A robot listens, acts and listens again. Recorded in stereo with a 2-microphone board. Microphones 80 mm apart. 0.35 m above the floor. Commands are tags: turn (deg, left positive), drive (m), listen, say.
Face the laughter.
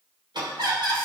<turn deg="-65"/>
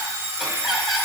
<say>Facing the laughter.</say>